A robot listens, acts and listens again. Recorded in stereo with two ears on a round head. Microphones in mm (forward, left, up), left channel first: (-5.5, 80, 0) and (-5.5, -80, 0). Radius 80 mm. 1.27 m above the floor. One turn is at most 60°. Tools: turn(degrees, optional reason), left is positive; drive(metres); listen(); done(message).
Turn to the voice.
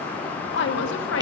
turn(degrees=60, reason="The woman speaking: about 75° left or 105° left.")
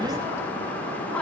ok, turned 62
listen()
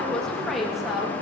done("Facing the woman speaking.")